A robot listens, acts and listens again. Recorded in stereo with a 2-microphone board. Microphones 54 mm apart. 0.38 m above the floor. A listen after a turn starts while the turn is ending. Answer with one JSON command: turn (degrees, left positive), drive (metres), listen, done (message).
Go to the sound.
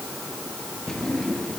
{"turn": 30}
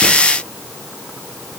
{"listen": true}
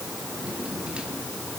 {"listen": true}
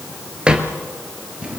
{"turn": -15}
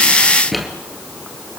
{"drive": 1.0}
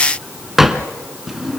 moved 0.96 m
{"drive": 1.0}
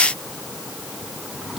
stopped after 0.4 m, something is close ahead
{"listen": true}
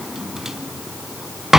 {"done": "Arrived at the drawer, straight ahead."}